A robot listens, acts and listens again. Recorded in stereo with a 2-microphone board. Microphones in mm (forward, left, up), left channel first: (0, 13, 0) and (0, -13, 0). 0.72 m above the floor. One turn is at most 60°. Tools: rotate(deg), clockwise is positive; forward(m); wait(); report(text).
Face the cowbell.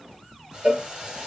rotate(60)
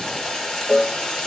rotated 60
rotate(10)
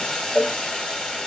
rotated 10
report("Found it: a cowbell, straight ahead.")